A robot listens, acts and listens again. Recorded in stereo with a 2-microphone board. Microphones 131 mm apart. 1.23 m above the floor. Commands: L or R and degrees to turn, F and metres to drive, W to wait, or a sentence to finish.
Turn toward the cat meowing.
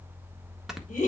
W
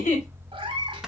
R35
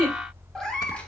L10
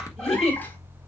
W
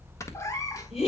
L25
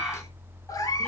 L30
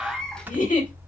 Facing the cat meowing.